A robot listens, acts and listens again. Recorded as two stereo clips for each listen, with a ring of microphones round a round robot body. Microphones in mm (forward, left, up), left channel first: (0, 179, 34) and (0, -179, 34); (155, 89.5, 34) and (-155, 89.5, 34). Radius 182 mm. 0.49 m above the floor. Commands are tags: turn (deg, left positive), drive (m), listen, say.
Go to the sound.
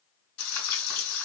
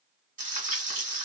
<turn deg="115"/>
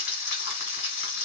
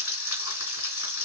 <turn deg="35"/>
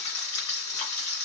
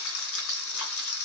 <turn deg="20"/>
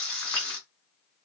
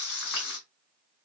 <drive m="1.0"/>
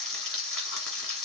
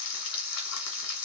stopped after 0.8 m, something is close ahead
<say>Arrived at the frying, straight ahead.</say>